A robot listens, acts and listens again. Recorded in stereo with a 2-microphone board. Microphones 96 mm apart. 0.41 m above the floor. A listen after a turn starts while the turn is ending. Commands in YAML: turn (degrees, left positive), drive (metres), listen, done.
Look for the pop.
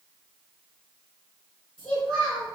listen: true
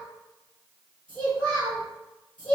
listen: true
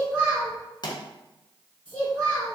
turn: 50
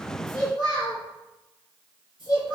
listen: true
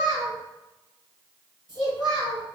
done: "I heard a pop, but can't make it out now. It was about straight ahead or 80° left."